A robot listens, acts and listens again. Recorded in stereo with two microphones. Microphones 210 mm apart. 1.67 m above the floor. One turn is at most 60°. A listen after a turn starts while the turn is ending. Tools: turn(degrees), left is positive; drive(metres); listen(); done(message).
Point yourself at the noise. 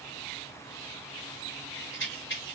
turn(degrees=60)
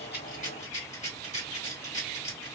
turn(degrees=40)
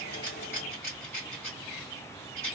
turn(degrees=15)
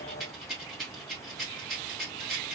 done("Found it: a rattle, straight ahead.")